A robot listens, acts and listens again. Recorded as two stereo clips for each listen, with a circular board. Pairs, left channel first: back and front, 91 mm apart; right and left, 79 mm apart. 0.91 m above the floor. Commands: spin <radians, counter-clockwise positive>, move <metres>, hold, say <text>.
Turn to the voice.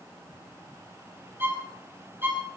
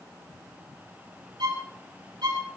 hold
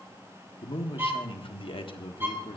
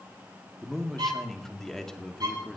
spin -3.05
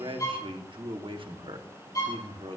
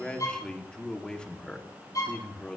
spin -0.17
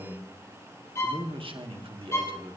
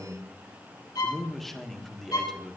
say Facing the man speaking, 1 to 2 m away.